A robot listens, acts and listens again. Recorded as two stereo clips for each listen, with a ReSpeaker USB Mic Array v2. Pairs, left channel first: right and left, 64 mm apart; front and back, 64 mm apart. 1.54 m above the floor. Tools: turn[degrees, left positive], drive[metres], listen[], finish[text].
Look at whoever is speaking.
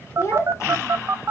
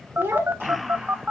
Thought: The child speaking: 130° right.
Action: turn[-130]
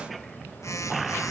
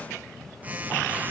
Action: listen[]
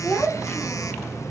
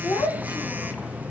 Thought: The child speaking is now 15° right.
Action: turn[-15]
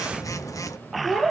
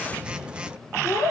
Action: finish[Found it: a child speaking, straight ahead, 2 to 4 m away.]